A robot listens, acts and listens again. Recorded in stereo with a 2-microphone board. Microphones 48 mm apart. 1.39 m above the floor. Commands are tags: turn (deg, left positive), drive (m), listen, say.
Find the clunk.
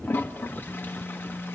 <listen/>
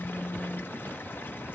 <listen/>
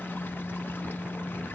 <say>I can't make out a clunk, only a toilet flushing and a phone buzzing.</say>